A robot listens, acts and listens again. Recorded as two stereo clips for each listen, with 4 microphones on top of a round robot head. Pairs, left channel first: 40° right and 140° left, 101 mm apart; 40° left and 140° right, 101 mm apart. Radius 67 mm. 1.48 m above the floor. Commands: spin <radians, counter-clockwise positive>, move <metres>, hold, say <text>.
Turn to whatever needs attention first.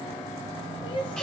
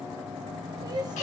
spin -1.48
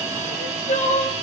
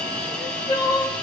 spin -0.26
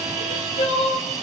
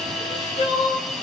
say Facing the crying, 1 to 2 m away.